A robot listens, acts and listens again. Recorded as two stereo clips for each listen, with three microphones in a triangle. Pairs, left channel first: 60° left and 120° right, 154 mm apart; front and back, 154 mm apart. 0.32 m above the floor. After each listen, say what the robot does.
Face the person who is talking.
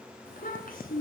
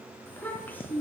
Turn 75° left.
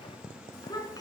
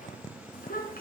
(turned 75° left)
Found it: a child speaking, straight ahead, 2 to 4 m away.